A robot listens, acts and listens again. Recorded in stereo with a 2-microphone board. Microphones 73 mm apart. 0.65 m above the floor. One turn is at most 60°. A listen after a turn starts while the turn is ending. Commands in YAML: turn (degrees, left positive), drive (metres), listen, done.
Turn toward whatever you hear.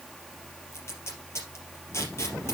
turn: 40
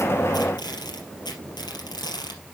turn: 60
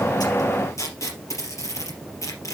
turn: 45
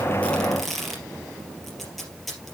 done: "Facing the tape being pulled."